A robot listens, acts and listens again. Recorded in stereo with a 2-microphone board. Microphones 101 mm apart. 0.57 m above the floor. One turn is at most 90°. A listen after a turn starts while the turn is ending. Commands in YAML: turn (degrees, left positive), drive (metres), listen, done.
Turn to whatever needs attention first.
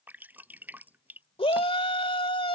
turn: 65
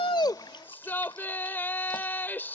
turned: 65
turn: 20
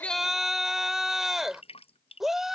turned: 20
done: "Found it: a shout, straight ahead."